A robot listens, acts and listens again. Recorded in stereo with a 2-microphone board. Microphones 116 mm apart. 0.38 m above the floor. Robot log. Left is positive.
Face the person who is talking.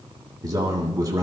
note: The man speaking: about 35° right or 145° right.
cmd yaw -35
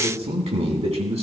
note: So it is at 110° right.
cmd yaw -110
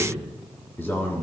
note: The man speaking is now 20° left.
cmd yaw +20
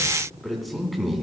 end: Facing the man speaking, 2 to 4 m away.